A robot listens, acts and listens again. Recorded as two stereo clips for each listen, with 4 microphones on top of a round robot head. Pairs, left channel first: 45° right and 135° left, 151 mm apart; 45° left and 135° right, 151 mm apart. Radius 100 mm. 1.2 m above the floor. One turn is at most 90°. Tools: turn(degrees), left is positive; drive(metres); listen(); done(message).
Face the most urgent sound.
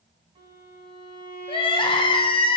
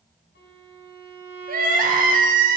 turn(degrees=-90)
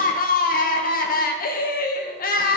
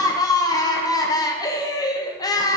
turn(degrees=-20)
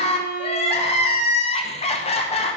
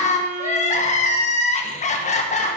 done("Facing the crying, 1 to 2 m away.")